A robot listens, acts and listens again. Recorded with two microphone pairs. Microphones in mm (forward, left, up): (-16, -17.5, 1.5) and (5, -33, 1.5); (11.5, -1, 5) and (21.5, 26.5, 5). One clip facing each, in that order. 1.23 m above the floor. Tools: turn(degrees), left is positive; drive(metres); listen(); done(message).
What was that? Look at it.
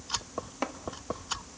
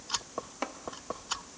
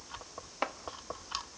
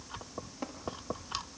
turn(degrees=-135)
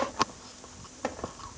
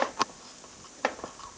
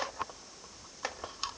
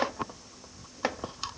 done("Found it: chopping, straight ahead, 1 to 2 m away.")